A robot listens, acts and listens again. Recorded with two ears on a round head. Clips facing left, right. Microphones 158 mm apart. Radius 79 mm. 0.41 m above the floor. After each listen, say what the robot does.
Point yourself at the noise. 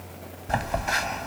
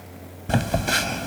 Turn 45° right.
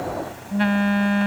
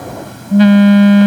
Turn 85° right.
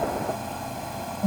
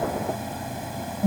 Turn 10° right.
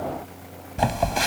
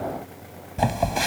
Found it: a phone buzzing, straight ahead.